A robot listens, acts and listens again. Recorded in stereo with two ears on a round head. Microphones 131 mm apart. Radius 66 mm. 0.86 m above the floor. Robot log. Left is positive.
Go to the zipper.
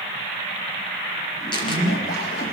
note: The zipper: about 75° left or 105° left.
cmd yaw +75
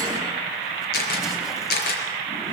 cmd idle
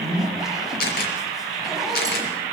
cmd fwd 1.0
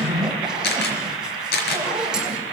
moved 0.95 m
cmd fwd 1.0
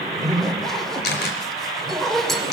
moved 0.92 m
cmd fwd 1.0
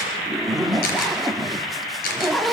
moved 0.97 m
cmd fwd 1.0
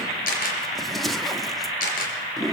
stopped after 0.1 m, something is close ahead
end: Arrived at the zipper, straight ahead.